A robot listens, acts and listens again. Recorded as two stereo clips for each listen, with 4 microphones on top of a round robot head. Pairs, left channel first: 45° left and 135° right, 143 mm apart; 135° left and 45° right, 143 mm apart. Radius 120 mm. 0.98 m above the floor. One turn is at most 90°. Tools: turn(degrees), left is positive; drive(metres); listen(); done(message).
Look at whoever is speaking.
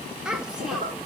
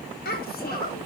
turn(degrees=90)
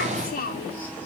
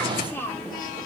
turn(degrees=60)
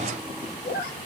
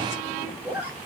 listen()
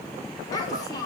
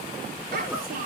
turn(degrees=-25)
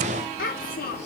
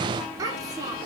turn(degrees=25)
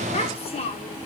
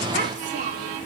done("Facing the child speaking, 1 to 2 m away.")